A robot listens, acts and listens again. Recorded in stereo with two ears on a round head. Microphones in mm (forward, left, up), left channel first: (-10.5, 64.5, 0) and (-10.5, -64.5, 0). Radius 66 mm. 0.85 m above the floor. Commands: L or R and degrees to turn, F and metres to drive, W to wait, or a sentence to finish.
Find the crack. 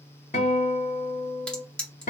L30
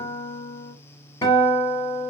W
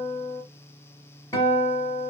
I heard a crack, but can't make it out now. It was about 25° right or 145° left.